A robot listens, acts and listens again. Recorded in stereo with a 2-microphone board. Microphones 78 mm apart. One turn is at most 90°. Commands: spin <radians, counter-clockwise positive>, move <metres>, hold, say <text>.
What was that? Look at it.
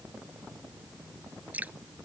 spin -0.35
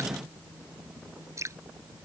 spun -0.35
spin -1.57
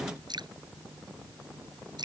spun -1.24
spin -1.22
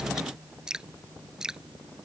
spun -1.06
spin -0.17
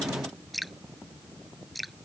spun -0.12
say Found it: dripping, straight ahead.